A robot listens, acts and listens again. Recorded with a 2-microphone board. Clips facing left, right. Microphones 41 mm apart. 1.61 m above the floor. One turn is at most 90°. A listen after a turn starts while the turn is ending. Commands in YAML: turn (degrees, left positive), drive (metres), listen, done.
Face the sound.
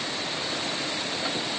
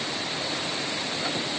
listen: true
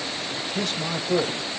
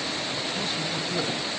turn: 90
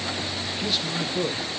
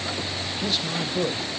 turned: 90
done: "Found it: a man speaking, straight ahead, under 1 m away."